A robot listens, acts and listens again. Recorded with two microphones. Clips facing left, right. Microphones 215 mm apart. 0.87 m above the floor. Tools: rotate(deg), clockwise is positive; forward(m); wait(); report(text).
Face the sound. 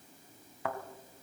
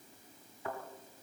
rotate(-90)
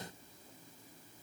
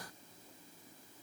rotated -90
report("I heard a thud from this way, but can't make it out now.")